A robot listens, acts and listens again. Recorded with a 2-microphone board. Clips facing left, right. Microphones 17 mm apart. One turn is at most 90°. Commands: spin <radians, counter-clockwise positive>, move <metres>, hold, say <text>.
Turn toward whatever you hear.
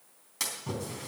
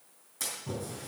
spin 0.96
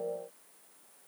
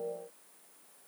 hold
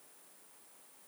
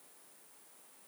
say I heard a splash, but can't make it out now. It was about straight ahead or 70° left.